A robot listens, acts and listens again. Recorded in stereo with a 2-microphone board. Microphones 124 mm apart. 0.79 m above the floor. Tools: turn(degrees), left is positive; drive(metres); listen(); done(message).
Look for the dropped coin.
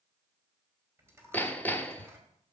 turn(degrees=-20)
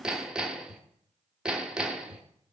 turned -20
listen()
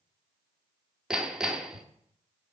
done("I heard a dropped coin, but can't make it out now. It was about straight ahead or 140° right.")